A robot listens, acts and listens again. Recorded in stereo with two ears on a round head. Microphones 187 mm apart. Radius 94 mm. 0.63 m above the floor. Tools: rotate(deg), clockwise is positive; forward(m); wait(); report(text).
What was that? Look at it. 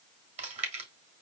rotate(35)
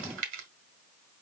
rotate(105)
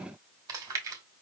rotate(20)
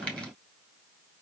report("Facing the chewing.")